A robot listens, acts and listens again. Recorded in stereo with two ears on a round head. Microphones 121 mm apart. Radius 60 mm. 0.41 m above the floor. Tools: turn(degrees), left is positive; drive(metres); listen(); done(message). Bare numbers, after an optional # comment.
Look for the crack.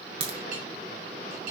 # The crack: about 45° right or 135° right.
turn(-45)
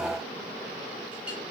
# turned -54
listen()
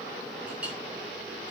done("I heard a crack, but can't make it out now. It was about 10° left or 80° right.")